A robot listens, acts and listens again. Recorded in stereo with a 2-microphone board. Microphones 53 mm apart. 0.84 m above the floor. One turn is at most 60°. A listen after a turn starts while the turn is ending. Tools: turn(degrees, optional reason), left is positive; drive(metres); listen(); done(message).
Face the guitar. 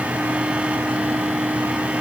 listen()
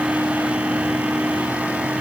listen()
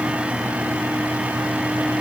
done("I can't make out a guitar to turn to.")